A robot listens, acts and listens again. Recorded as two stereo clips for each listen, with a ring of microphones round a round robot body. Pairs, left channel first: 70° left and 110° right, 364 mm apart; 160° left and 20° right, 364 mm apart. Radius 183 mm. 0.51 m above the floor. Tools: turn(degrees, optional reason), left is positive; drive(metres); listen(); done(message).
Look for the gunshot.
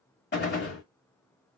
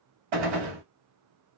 done("Found it: a gunshot, straight ahead, 1 to 2 m away.")